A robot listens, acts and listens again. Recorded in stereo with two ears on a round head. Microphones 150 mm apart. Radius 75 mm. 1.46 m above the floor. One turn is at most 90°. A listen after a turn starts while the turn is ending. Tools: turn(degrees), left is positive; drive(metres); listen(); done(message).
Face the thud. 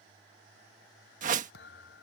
turn(degrees=70)
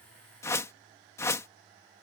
listen()
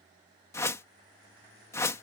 done("I heard a thud, but can't make it out now. It was about straight ahead or 40° left.")